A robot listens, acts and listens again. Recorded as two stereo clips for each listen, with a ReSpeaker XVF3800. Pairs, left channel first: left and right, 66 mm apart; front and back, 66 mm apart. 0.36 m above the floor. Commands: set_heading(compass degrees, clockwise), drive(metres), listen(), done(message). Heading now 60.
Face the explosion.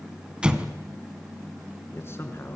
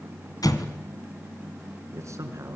set_heading(75)
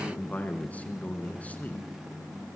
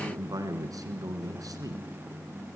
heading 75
done("Facing where the explosion came from. I can't hear it now.")